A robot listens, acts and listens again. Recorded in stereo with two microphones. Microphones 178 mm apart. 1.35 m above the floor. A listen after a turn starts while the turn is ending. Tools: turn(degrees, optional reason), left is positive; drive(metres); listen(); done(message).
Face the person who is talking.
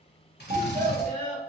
turn(degrees=-50, reason="The child speaking: about 50° right or 130° right.")
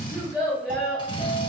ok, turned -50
done("Facing the child speaking, 1 to 2 m away.")